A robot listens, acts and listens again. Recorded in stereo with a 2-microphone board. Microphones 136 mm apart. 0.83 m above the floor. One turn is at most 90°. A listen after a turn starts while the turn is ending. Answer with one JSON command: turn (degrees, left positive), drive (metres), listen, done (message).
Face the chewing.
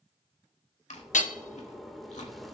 {"turn": 65}
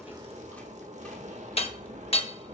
{"listen": true}
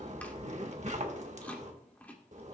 {"turn": 15}
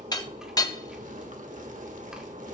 {"listen": true}
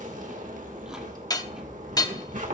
{"listen": true}
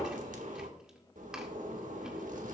{"done": "Facing where the chewing came from. I can't hear it now."}